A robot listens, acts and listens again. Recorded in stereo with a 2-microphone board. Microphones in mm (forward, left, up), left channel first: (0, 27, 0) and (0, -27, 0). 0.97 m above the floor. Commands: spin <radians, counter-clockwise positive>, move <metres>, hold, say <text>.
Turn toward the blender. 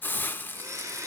spin -1.13
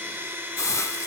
spin -0.79
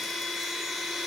say Found it: a blender, straight ahead.